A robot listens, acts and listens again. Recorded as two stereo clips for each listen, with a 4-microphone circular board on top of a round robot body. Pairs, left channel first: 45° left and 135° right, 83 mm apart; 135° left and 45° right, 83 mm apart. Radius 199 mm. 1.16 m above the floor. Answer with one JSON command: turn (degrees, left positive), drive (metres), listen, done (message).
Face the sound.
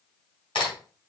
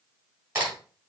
{"turn": 15}
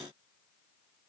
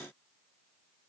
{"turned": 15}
{"done": "I heard a crack from this way, but can't make it out now."}